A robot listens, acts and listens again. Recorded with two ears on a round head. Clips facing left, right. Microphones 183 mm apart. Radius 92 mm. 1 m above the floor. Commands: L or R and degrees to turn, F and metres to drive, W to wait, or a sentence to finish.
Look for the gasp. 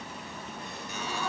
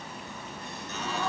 R45
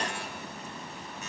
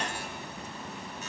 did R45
W
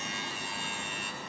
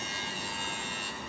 I heard a gasp, but can't make it out now. It was about straight ahead or 90° right.